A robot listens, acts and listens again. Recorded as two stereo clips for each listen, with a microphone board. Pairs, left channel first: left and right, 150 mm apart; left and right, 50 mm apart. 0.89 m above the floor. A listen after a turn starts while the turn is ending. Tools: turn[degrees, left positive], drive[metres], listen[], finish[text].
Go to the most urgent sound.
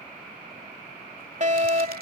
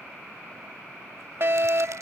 Thought: The fire alarm: about 50° right or 130° right.
Action: turn[-50]
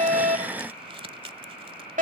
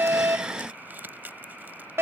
Thought: So it is at 70° right.
Action: turn[-70]
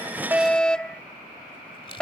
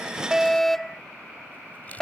Action: drive[1.0]
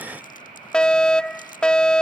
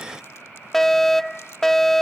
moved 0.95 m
Thought: The fire alarm is now 10° left.
Action: turn[10]
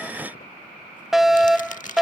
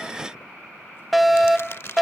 Action: drive[1.0]
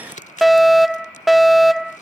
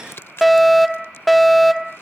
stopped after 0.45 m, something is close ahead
Action: finish[Arrived at the fire alarm, straight ahead.]